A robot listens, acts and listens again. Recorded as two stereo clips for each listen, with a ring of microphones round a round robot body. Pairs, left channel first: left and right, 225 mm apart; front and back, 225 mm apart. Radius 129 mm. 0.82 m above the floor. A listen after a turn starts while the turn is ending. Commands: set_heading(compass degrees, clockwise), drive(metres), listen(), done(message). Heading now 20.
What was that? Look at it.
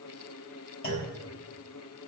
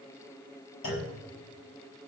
set_heading(345)
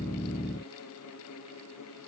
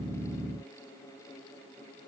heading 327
set_heading(347)
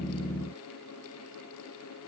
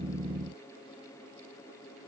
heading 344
done("Facing where the clunk came from. I can't hear it now.")